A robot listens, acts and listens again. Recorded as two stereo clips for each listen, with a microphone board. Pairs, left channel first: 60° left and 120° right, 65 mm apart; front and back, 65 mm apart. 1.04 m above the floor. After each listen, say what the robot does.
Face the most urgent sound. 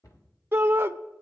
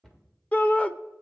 Turn 65° right.
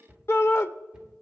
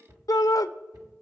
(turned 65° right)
Turn 15° left.
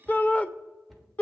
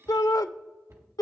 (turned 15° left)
Found it: a shout, straight ahead.